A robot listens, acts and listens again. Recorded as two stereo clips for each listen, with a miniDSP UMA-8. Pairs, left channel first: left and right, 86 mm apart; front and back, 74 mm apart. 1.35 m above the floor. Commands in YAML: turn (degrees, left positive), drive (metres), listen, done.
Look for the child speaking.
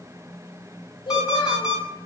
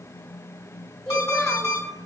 turn: 80
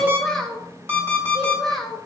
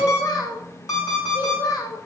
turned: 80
done: "Facing the child speaking."